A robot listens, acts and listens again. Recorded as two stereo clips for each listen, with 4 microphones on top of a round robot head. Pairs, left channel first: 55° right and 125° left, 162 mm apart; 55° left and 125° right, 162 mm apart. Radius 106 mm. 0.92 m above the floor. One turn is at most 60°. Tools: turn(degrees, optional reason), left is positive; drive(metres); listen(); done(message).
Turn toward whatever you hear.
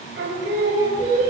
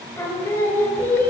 turn(degrees=60, reason="The singing: 130° left.")
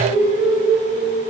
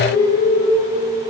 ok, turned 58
turn(degrees=60, reason="The singing is now 70° left.")
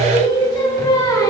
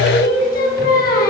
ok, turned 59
turn(degrees=15, reason="The singing is now 15° left.")
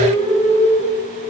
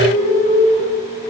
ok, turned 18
done("Found it: singing, straight ahead.")